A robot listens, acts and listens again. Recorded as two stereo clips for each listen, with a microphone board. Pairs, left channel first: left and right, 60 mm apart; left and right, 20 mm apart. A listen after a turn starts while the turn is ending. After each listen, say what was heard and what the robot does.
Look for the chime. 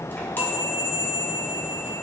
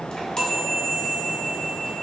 The chime: about 35° left or 145° left. Turn 35° left.
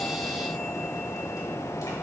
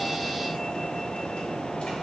Keep listening.
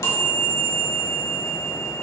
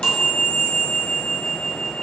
So it is at 110° left. Turn 110° left.
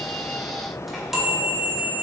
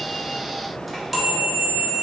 Found it: a chime, straight ahead.